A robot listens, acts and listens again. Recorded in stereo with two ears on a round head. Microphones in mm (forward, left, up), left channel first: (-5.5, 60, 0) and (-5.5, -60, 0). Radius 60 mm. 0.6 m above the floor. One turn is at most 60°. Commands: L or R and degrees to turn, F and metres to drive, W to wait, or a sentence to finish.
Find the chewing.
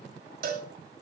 W
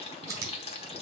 R25
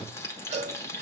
W
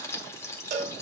W
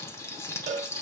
I heard chewing, but can't make it out now. It was about straight ahead or 130° right.